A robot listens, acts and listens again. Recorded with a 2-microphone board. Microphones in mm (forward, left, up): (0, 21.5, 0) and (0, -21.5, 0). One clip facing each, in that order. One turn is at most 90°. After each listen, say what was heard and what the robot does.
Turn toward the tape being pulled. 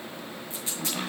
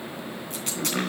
The tape being pulled: about 65° right or 115° right. Turn 65° right.
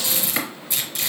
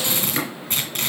So it is at 50° right. Turn 50° right.
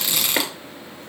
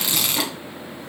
Found it: tape being pulled, straight ahead.